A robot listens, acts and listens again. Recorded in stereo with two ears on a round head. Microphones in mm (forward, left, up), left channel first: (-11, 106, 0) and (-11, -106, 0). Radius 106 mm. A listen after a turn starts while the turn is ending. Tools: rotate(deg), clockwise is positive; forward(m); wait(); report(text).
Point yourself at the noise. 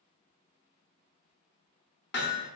rotate(-50)
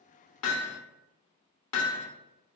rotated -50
rotate(-80)
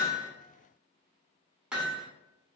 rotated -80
report("Facing the hammering.")